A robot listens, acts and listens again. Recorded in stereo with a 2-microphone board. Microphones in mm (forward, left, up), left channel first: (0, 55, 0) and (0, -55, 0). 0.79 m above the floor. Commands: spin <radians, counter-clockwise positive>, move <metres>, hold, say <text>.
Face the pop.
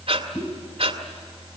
spin 0.52
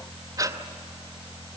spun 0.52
hold
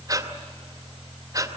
say I heard a pop, but can't make it out now. It was about straight ahead or 120° left.